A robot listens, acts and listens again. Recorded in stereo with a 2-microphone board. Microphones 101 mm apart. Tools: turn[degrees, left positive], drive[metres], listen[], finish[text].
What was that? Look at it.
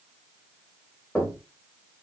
Action: turn[30]
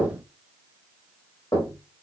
Thought: So it is at 135° left.
Action: turn[135]
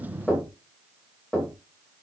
Thought: The knocking is now 10° left.
Action: turn[10]
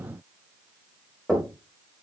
Action: finish[Found it: knocking, straight ahead, 2 to 4 m away.]